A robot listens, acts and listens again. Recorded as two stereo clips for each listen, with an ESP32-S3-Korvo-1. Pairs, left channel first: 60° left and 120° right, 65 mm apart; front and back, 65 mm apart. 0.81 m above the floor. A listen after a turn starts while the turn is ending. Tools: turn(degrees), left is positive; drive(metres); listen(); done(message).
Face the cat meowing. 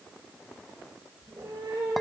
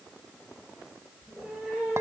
turn(degrees=-90)
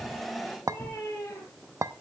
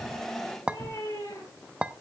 turn(degrees=15)
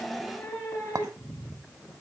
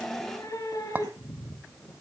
turn(degrees=10)
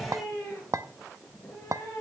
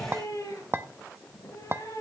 done("Facing the cat meowing, over 4 m away.")